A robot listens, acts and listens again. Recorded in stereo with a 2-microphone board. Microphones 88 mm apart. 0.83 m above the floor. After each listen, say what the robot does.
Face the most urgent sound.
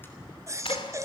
Turn 35° right.
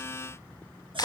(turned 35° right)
Keep listening.
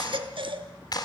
Turn 110° right.
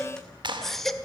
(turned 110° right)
Facing the baby crying.